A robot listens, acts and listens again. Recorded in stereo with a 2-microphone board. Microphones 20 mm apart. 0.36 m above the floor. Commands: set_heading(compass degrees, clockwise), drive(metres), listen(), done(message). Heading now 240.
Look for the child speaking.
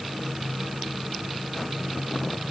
listen()
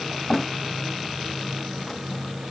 listen()
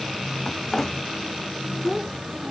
set_heading(260)
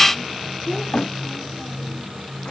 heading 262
listen()
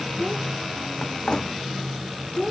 done("Found it: a child speaking, straight ahead.")